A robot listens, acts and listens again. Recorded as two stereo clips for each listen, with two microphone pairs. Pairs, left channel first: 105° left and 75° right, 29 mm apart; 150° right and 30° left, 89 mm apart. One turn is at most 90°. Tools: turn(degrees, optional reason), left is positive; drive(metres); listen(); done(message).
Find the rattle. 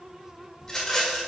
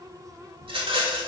turn(degrees=35, reason="The rattle: 35° left.")
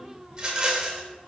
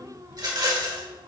turn(degrees=-10, reason="The rattle is now 10° right.")
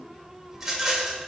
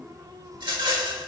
done("Found it: a rattle, straight ahead.")